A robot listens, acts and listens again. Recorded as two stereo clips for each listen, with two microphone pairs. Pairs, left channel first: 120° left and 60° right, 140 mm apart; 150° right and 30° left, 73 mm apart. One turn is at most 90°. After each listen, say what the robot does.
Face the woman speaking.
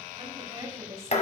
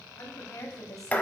Turn 90° right.
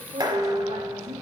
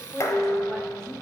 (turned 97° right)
Turn 75° right.
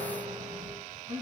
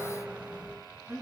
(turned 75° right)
Turn 30° right.
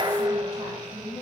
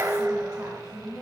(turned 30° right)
Facing the woman speaking, 2 to 4 m away.